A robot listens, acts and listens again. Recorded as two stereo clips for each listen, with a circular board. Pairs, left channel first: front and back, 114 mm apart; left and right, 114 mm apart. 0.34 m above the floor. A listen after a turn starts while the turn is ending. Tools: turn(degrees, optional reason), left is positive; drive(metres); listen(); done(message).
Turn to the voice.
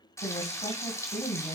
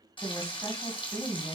turn(degrees=20, reason="The woman speaking: 20° left.")
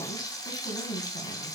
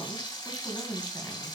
turn(degrees=10, reason="The woman speaking is now 10° left.")
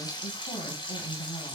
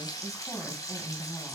done("Facing the woman speaking.")